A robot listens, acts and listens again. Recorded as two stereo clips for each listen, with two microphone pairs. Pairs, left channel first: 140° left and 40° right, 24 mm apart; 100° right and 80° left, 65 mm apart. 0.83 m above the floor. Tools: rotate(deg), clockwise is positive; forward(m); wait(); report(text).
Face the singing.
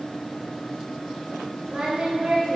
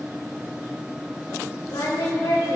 rotate(90)
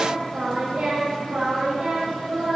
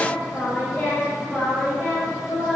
rotate(35)
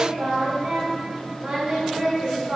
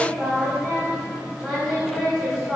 report("Found it: singing, straight ahead.")